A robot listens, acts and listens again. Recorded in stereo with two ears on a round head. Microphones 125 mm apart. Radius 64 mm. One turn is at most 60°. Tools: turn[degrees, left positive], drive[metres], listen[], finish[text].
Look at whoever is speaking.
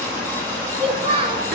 Thought: The child speaking: about 40° right or 140° right.
Action: turn[-40]
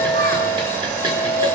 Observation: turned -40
Action: listen[]
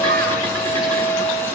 Action: listen[]
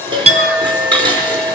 Action: finish[I heard a child speaking, but can't make it out now. It was about straight ahead or 100° right.]